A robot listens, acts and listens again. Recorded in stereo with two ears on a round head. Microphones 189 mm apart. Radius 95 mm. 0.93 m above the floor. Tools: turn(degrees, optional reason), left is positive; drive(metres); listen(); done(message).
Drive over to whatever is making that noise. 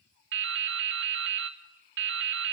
turn(degrees=-60, reason="The dripping: about 60° right or 120° right.")
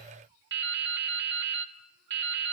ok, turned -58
turn(degrees=-60, reason="So it is at 60° right.")
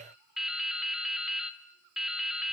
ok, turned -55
drive(metres=1.0)
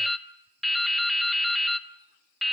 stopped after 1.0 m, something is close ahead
done("Arrived at the dripping, straight ahead.")